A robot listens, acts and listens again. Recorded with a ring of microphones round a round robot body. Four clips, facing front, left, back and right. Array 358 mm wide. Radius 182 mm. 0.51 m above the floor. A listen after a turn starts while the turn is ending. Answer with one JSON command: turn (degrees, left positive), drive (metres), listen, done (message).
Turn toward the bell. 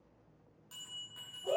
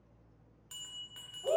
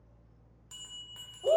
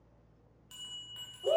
{"turn": 165}
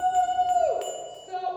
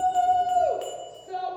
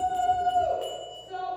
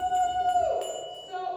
{"done": "Facing the bell, 2 to 4 m away."}